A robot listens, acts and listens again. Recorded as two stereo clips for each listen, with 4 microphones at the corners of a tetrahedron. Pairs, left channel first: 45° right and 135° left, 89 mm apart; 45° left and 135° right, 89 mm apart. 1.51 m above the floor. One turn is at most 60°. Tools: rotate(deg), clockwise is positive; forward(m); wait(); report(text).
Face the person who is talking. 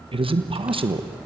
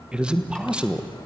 rotate(-60)
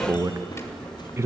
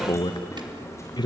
rotate(-60)
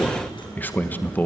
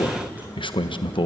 rotate(-25)
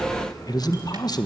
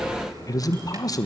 report("Found it: a man speaking, straight ahead.")